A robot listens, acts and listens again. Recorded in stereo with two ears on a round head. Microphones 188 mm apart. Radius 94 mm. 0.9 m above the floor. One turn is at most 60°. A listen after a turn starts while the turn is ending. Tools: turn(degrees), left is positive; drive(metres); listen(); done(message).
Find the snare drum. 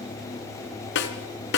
turn(degrees=60)
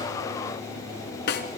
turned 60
turn(degrees=55)
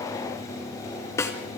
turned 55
turn(degrees=15)
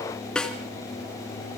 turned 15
done("Facing the snare drum.")